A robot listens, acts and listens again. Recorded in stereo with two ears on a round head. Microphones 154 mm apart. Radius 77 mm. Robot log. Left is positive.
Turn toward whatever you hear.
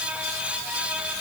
cmd idle
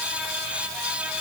cmd idle
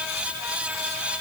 end: I can't make out anything to turn to.